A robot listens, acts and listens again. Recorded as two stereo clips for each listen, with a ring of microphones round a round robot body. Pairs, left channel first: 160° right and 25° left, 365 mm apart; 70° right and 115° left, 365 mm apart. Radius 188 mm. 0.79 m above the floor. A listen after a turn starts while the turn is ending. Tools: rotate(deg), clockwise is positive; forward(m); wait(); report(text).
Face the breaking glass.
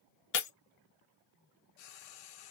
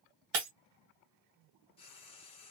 rotate(-140)
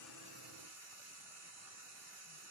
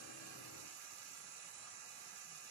report("Facing where the breaking glass came from. I can't hear it now.")